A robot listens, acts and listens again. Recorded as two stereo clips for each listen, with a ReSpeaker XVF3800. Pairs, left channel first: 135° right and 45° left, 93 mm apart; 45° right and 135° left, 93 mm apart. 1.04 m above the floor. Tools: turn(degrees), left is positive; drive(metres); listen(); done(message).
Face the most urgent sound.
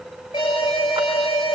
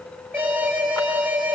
turn(degrees=-155)
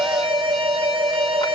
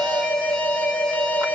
turn(degrees=25)
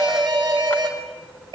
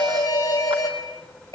done("Facing the alarm, over 4 m away.")